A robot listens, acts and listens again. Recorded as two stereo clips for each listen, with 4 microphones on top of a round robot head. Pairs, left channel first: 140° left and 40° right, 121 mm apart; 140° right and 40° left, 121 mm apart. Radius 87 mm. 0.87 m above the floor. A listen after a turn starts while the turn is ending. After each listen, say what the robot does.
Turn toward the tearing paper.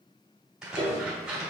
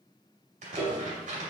Turn 45° left.
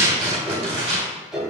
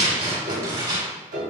Found it: tearing paper, straight ahead.